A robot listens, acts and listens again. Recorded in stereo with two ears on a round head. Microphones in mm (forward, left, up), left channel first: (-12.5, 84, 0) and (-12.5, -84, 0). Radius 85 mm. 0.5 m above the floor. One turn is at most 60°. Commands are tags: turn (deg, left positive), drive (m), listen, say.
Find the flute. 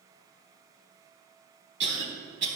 <listen/>
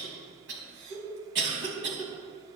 <listen/>
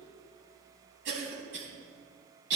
<say>I can't make out a flute to turn to.</say>